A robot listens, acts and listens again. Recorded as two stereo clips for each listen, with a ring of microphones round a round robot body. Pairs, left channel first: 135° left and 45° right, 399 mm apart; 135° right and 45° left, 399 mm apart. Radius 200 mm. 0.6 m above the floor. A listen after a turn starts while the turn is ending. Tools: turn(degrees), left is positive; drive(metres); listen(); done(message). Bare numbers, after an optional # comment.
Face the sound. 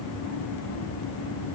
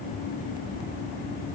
listen()
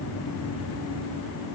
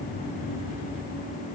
listen()
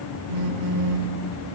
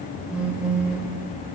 # The phone buzzing: 40° right.
turn(-40)
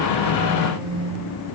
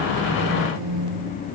done("Facing the phone buzzing, under 1 m away.")